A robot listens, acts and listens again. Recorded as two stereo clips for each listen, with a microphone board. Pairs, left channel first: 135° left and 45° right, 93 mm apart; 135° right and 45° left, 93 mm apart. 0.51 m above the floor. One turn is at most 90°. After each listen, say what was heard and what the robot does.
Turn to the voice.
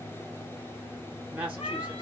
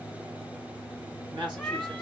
The woman speaking: 30° left. Turn 30° left.
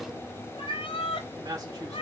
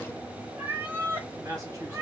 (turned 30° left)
Facing the woman speaking.